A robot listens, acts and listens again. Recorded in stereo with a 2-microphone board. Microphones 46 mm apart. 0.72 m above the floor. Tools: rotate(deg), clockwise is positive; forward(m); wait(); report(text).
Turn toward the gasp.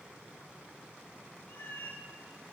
wait()
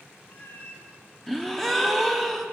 rotate(-30)
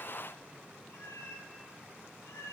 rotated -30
wait()
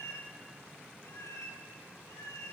report("I heard a gasp, but can't make it out now. It was about 25° right or 145° left.")